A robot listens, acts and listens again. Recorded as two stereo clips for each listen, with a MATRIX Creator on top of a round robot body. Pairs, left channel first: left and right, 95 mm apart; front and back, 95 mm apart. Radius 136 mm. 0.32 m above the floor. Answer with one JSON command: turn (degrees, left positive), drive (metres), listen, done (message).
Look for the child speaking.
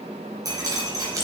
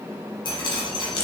{"listen": true}
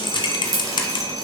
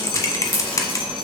{"listen": true}
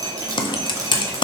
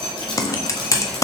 {"done": "I can't make out a child speaking, only dripping and typing on a keyboard."}